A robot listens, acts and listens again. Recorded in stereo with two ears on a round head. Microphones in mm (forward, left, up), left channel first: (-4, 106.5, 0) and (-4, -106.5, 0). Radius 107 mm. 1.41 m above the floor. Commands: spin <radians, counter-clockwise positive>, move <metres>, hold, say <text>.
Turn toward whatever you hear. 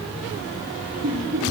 spin -0.96
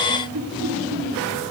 spin -1.22
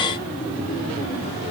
hold
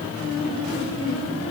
spin 0.35
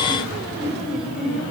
say Found it: laughter, straight ahead, over 4 m away.